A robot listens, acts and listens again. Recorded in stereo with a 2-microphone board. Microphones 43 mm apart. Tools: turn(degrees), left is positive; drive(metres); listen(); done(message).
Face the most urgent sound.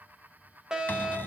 turn(degrees=-30)
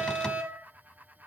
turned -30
turn(degrees=-135)
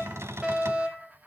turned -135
turn(degrees=-30)
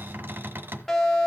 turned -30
turn(degrees=10)
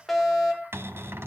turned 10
done("Facing the fire alarm.")